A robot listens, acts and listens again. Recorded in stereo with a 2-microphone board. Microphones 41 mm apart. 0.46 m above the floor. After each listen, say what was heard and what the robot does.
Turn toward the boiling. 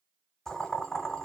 Turn 30° left.
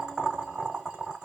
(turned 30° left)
So it is at 20° right. Turn 20° right.
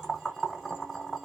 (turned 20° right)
The boiling is now 10° right. Turn 10° right.
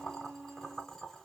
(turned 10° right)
Facing the boiling, 1 to 2 m away.